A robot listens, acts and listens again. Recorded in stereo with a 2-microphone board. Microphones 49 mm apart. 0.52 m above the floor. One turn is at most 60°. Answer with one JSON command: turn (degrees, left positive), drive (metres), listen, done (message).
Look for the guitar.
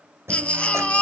{"turn": -60}
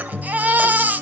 {"turn": -55}
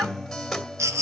{"done": "Facing the guitar, 2 to 4 m away."}